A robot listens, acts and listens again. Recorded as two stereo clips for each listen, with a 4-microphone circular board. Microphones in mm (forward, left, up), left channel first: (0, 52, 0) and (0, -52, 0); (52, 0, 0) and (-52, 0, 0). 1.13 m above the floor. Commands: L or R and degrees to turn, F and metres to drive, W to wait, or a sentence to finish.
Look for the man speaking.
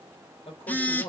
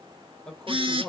L80
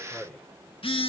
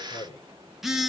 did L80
Found it: a man speaking, straight ahead, 2 to 4 m away.